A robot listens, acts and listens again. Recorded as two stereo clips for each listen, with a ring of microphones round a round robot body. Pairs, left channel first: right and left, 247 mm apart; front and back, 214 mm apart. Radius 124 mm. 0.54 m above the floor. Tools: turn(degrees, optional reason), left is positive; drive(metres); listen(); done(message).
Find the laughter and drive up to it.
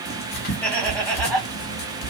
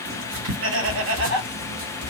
turn(degrees=-175, reason="The laughter: 175° right.")
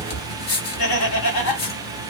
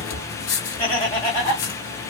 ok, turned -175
turn(degrees=-70, reason="The laughter is now 70° right.")
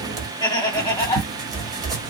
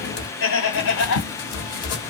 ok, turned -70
turn(degrees=-15, reason="The laughter is now 15° right.")
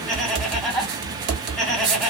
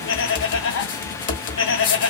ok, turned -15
drive(metres=1.0)
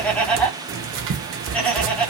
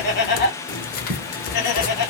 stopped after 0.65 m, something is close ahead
done("Arrived at the laughter, straight ahead.")